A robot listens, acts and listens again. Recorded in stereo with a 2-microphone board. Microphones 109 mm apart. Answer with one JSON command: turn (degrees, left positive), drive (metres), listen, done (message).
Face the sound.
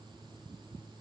{"listen": true}
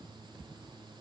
{"listen": true}
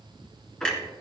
{"turn": 30}
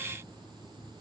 {"listen": true}
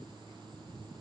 {"done": "I heard a clunk, but can't make it out now. It was about 25° right or 145° left."}